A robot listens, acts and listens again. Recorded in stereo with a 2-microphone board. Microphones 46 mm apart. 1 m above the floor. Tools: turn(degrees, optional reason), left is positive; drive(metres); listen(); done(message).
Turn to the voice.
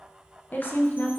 turn(degrees=45, reason="The woman speaking: about 45° left or 135° left.")
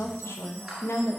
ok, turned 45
turn(degrees=85, reason="So it is at 85° left.")
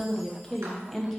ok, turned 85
turn(degrees=10, reason="The woman speaking is now 10° left.")
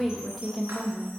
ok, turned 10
done("Found it: a woman speaking, straight ahead.")